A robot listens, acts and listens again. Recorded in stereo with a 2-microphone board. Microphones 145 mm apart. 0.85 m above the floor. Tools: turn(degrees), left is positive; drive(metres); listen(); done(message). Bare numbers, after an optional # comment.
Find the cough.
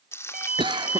# The cough: about 30° right or 150° right.
turn(-30)
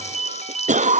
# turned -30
# So it is at 115° right.
turn(-115)
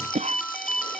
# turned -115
# The cough is now 55° right.
turn(-55)
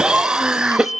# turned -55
done("Facing the cough.")